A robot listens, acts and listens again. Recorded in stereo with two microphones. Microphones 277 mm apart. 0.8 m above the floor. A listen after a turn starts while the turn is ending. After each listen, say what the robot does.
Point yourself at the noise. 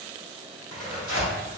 Turn 90° left.
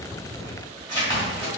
Turn 15° left.
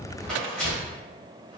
Facing the tearing paper.